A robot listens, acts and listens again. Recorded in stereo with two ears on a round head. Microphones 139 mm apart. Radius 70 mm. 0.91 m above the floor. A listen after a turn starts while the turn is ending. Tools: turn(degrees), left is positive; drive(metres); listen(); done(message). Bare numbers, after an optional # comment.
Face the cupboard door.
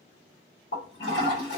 listen()
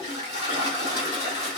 listen()
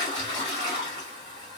done("I can't make out a cupboard door to turn to.")